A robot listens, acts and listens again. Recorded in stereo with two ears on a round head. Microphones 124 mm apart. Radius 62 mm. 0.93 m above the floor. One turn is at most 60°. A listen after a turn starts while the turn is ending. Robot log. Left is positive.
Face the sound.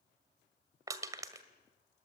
note: The crushing: about 25° right or 155° right.
cmd yaw -25
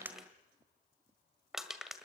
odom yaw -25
end: Found it: crushing, straight ahead, 1 to 2 m away.